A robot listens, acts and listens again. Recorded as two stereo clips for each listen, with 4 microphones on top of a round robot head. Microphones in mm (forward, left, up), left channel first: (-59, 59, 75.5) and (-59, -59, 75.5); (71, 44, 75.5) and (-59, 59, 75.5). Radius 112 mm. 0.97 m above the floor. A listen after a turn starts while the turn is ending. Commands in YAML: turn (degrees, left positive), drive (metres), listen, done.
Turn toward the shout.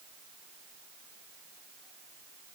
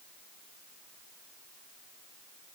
listen: true
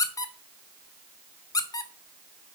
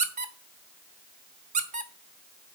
listen: true
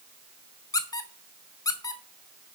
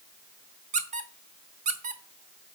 done: "I can't make out a shout to turn to."